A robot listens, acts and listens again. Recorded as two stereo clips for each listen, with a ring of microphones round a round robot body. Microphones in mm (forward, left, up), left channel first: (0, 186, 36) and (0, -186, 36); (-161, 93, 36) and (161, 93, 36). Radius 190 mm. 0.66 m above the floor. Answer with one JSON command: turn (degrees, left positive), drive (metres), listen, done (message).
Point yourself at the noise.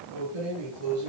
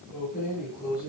{"turn": -110}
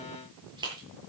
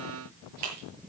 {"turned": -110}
{"turn": -10}
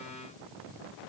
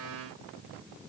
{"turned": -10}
{"listen": true}
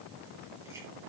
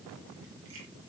{"listen": true}
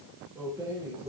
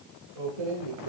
{"done": "Facing the keys jangling, over 4 m away."}